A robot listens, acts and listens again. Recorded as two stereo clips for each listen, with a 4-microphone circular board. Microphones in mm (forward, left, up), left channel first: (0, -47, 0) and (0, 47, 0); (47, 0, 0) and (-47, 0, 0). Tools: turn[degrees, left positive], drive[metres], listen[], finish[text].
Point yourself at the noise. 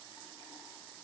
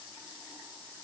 Action: listen[]
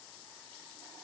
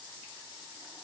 Action: listen[]
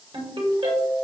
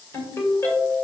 Thought: The ringtone: 60° left.
Action: turn[60]
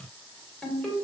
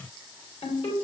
Thought: The ringtone is now 10° right.
Action: turn[-10]
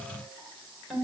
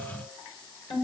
Action: finish[Found it: a ringtone, straight ahead.]